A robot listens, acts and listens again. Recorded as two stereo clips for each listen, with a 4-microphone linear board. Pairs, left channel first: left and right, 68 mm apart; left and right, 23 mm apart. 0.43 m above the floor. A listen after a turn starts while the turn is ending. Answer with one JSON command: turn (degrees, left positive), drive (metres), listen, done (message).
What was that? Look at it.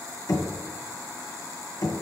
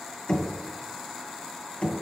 {"turn": 65}
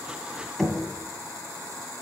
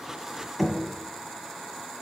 {"done": "Found it: knocking, straight ahead, 2 to 4 m away."}